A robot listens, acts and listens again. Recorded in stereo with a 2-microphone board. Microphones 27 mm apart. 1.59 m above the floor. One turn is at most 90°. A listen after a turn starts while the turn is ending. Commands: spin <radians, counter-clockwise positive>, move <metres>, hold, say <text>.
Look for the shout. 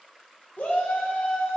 spin 1.57
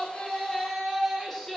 spin 0.17
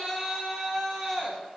say Found it: a shout, straight ahead.